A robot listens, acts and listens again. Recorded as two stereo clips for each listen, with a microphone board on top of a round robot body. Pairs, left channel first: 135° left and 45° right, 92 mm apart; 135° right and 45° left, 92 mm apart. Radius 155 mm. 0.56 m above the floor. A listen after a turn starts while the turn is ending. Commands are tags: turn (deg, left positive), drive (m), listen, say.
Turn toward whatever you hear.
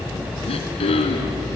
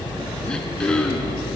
<turn deg="145"/>
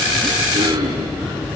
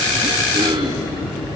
<say>Found it: throat clearing, straight ahead.</say>